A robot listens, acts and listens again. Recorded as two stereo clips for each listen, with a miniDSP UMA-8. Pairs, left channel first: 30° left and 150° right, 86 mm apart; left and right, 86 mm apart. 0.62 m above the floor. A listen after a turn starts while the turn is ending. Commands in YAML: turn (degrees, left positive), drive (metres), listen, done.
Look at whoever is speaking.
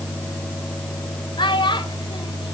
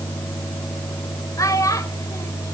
turn: 40
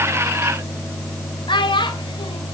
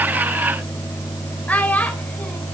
turn: 20
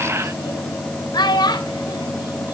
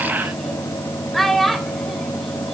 done: "Found it: a child speaking, straight ahead."